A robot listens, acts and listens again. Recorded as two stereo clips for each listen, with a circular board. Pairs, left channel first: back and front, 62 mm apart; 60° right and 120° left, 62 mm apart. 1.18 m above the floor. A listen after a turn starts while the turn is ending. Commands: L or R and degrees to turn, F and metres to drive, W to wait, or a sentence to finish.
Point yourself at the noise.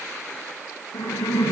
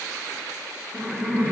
R160
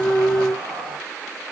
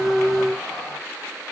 W
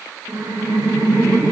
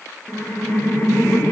Found it: laughter, straight ahead, 1 to 2 m away.